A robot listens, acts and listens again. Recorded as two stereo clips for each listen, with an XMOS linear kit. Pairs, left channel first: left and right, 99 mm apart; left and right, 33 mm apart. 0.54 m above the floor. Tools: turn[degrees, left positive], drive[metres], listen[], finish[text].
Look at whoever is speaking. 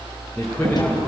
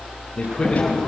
Action: turn[30]
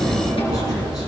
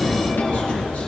Action: listen[]
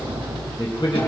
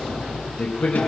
Thought: So it is at 135° left.
Action: turn[135]
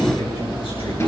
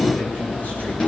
Thought: The man speaking is now 60° left.
Action: turn[60]
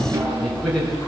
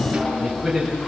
Action: finish[Found it: a man speaking, straight ahead, over 4 m away.]